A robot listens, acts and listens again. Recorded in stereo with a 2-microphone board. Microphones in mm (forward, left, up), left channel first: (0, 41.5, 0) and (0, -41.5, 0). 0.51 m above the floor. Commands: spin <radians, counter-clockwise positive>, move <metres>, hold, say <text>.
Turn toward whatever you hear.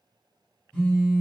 spin 0.52
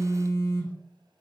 spin 2.44
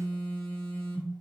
spin 0.52
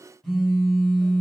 say Found it: a phone buzzing, straight ahead.